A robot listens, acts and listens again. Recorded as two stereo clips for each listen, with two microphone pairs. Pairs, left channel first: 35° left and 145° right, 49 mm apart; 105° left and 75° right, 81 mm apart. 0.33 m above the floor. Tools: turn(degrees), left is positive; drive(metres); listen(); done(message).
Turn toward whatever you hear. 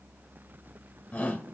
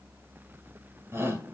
turn(degrees=-25)
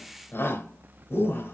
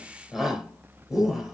done("Facing the shout.")